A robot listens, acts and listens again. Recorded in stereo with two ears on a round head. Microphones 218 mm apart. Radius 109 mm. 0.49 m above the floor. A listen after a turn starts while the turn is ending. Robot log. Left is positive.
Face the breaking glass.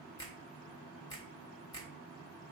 cmd idle
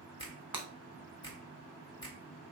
cmd yaw -30
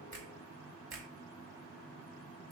cmd idle
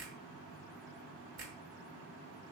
end: I heard breaking glass, but can't make it out now. It was about 20° left or 140° right.